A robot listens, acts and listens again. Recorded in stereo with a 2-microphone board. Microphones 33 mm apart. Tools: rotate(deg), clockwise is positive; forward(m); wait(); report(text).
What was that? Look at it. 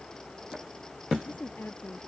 rotate(-90)
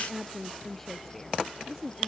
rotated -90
report("Facing the woman speaking.")